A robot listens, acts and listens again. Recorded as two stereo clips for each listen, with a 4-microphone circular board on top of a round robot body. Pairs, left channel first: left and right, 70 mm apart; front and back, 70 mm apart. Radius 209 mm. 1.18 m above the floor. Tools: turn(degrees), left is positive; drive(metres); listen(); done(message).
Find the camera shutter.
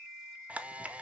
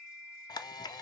turn(degrees=-20)
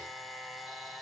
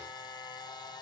done("Facing the camera shutter.")